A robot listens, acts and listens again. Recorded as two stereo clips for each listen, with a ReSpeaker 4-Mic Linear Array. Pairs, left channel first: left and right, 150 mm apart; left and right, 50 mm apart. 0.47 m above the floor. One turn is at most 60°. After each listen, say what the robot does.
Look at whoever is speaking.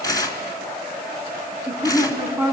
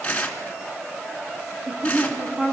Turn 30° right.
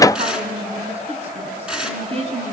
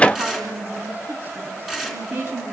Turn 60° right.
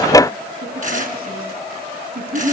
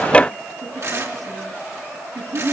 Turn 60° right.
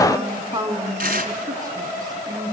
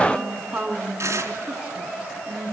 Turn 20° right.
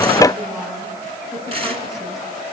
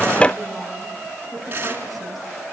Keep listening.
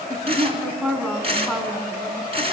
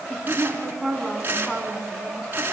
Facing the woman speaking, over 4 m away.